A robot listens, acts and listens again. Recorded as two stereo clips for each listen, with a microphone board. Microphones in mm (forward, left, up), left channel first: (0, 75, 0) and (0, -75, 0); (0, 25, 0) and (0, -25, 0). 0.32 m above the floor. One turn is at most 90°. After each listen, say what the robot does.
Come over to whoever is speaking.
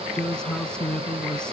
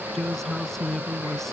Turn 30° left.
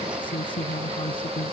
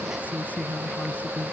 Turn 90° left.
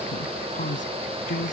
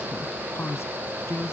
Turn 70° left.
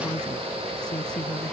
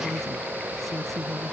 Drive 1.0 m forward.
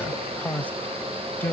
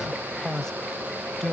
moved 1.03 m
Turn 15° left.
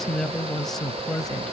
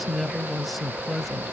Drive 1.0 m forward.
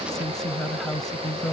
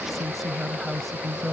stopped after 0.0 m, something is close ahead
I am next to the woman speaking.